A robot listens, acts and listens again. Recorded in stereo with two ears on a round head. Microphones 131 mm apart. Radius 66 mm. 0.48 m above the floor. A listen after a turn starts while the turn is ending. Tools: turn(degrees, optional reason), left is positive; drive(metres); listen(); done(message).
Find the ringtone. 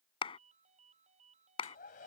turn(degrees=-50, reason="The ringtone: about 50° right or 130° right.")
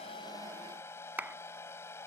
listen()
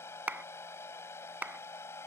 listen()
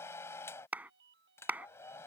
turn(degrees=-85, reason="So it is at 85° right.")
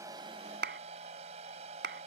listen()
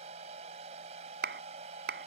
listen()
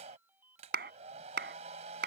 turn(degrees=-15, reason="The ringtone is now 15° right.")
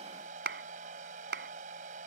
listen()
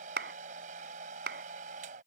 listen()
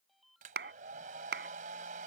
done("Found it: a ringtone, straight ahead.")